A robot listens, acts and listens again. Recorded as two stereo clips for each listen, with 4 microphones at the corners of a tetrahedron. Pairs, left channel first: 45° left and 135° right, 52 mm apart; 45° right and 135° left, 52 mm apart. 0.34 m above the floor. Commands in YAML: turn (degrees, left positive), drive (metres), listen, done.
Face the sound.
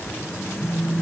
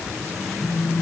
turn: -35
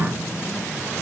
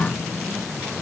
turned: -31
done: "Facing the phone buzzing."